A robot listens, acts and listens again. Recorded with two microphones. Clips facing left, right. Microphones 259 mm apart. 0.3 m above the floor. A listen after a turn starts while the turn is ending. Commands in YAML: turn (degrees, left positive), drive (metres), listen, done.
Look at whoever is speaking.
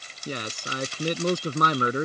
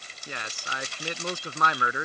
turn: 40
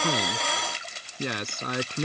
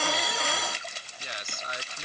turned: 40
turn: 95
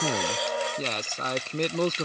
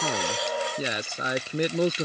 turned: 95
turn: -10
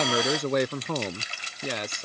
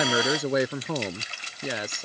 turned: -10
done: "Found it: a man speaking, straight ahead."